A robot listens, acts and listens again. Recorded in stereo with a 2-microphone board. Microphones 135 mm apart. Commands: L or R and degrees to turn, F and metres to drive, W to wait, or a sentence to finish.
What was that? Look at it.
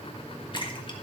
L35
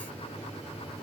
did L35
W
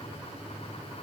I heard a splash, but can't make it out now. It was about straight ahead or 110° left.